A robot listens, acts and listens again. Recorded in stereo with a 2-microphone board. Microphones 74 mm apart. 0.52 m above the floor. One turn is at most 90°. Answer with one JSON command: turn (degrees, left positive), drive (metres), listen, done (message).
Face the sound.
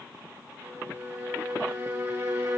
{"turn": -30}
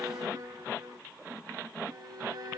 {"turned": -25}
{"turn": -90}
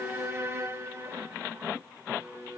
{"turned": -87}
{"turn": -40}
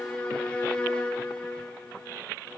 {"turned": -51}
{"turn": 10}
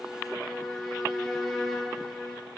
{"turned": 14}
{"done": "Facing the violin."}